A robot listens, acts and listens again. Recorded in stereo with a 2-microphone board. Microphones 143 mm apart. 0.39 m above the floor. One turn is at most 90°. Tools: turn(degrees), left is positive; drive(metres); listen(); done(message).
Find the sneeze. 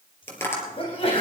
turn(degrees=40)
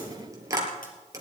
listen()
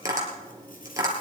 done("I heard a sneeze, but can't make it out now. It was about straight ahead or 100° left.")